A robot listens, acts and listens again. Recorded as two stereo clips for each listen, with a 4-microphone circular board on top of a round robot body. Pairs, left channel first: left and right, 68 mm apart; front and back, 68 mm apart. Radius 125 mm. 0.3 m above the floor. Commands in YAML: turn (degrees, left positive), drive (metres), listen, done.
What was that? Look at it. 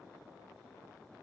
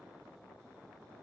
listen: true
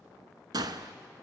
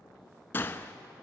turn: -60
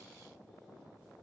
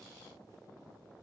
done: "I heard a gunshot from this way, but can't make it out now."